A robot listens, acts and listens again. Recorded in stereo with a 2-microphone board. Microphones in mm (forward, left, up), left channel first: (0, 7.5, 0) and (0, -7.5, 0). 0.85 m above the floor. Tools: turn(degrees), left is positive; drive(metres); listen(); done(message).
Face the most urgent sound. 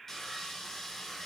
listen()
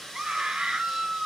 turn(degrees=-70)
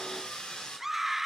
turn(degrees=-20)
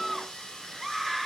done("Found it: a scream, straight ahead, 2 to 4 m away.")